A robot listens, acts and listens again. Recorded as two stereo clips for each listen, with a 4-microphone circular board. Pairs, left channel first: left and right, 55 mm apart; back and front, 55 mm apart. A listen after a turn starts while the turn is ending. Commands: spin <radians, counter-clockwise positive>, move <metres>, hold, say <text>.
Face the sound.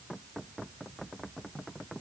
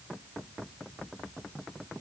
hold
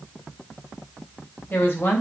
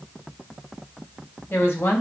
spin 2.53
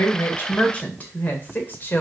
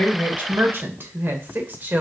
spin 0.79
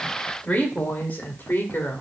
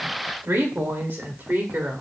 spin 0.70
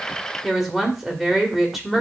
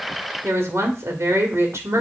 say Facing the woman speaking, 2 to 4 m away.